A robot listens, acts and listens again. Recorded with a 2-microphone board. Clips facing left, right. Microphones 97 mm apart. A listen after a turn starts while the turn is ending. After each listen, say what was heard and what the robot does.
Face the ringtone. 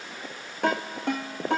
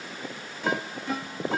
The ringtone: about 65° left or 115° left. Turn 65° left.
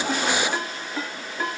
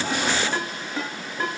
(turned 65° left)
Found it: a ringtone, straight ahead.